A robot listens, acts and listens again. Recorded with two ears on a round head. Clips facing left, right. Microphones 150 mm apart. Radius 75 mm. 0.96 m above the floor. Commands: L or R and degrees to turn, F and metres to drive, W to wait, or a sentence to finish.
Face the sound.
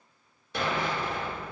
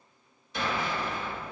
L50
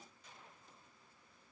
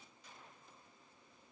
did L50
W
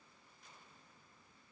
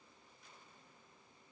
I heard an explosion, but can't make it out now. It was about straight ahead or 80° left.